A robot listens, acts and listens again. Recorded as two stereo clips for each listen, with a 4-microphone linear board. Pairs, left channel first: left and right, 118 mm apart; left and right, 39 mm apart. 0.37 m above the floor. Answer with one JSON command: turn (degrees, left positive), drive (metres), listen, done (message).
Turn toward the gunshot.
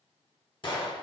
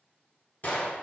{"turn": 45}
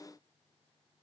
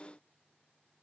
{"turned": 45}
{"listen": true}
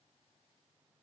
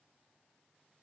{"done": "I heard a gunshot, but can't make it out now. It was about straight ahead or 90° left."}